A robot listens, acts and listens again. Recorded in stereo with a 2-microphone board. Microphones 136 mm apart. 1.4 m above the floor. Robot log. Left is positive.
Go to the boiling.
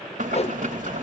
note: The boiling: about 75° right or 105° right.
cmd yaw -75
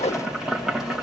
cmd fwd 1.0
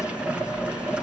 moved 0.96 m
note: The boiling is now 10° right.
cmd yaw -10
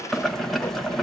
cmd fwd 1.0
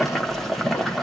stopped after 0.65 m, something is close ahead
end: Arrived at the boiling, straight ahead.